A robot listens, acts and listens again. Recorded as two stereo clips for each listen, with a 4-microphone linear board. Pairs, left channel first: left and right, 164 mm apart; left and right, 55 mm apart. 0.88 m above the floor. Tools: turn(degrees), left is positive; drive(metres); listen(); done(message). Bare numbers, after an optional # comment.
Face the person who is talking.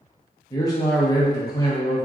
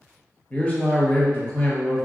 # The man speaking: about 20° left or 160° left.
turn(20)
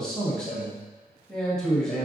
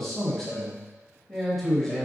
done("Facing the man speaking.")